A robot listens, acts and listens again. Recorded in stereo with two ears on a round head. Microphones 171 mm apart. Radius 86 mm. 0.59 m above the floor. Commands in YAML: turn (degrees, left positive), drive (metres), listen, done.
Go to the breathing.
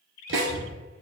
turn: 30
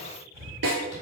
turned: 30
turn: -15
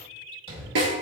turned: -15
drive: 1.0
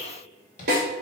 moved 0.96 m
listen: true
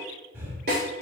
turn: -15
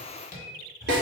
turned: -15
drive: 1.0
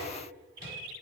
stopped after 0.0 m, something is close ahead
listen: true
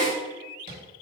listen: true
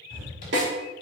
done: "Arrived at the breathing, straight ahead."